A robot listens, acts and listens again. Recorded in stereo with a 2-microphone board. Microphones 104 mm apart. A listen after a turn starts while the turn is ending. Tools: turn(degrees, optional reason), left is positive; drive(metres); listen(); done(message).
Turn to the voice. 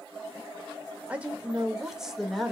turn(degrees=30)
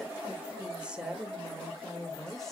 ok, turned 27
turn(degrees=30)
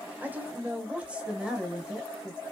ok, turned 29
turn(degrees=-30)
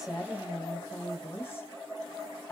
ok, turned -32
turn(degrees=25, reason="So it is at 25° left.")
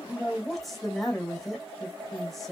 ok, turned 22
done("Found it: a woman speaking, straight ahead, 2 to 4 m away.")